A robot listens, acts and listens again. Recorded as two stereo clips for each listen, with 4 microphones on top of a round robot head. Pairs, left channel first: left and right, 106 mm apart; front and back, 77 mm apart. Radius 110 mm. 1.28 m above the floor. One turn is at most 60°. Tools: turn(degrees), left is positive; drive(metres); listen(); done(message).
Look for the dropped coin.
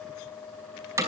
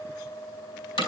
listen()
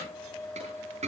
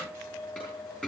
turn(degrees=-60)
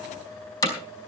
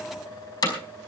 turn(degrees=-20)
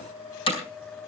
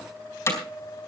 done("I heard a dropped coin from this way, but can't make it out now.")